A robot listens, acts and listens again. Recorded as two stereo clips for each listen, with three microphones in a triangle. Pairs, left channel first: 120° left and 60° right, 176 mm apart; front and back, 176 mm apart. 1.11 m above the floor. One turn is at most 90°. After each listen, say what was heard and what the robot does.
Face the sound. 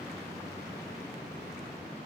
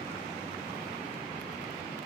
Keep listening.
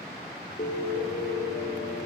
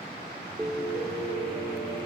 The piano: 105° left. Turn 90° left.
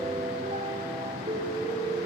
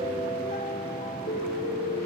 The piano is now 15° right. Turn 15° right.
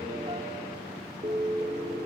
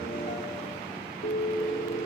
Facing the piano, 2 to 4 m away.